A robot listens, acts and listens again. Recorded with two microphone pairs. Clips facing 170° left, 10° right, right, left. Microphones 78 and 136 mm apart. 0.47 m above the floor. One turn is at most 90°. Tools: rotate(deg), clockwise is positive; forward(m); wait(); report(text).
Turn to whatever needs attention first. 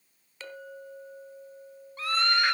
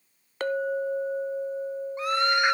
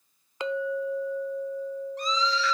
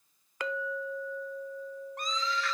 rotate(-60)
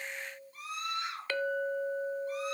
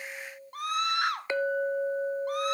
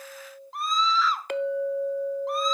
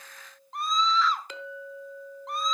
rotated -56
report("Found it: a scream, straight ahead.")